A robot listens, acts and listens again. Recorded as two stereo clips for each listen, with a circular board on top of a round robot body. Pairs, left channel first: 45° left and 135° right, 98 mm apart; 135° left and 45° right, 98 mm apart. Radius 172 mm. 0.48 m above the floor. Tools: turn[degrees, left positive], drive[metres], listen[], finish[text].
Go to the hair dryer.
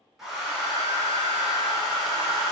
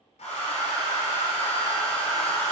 Thought: The hair dryer: 135° left.
Action: turn[135]
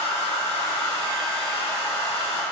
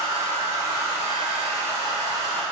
Thought: The hair dryer is now 15° left.
Action: turn[15]
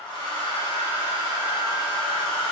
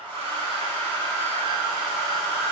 Action: drive[1.0]
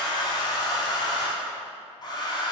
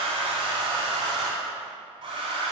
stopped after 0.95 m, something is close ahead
Action: finish[Arrived at the hair dryer, straight ahead.]